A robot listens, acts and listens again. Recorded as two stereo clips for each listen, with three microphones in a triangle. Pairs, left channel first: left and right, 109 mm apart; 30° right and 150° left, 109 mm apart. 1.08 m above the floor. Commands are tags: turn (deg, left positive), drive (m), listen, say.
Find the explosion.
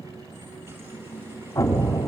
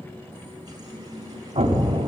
<turn deg="150"/>
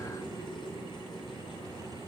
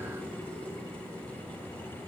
<say>I heard an explosion from this way, but can't make it out now.</say>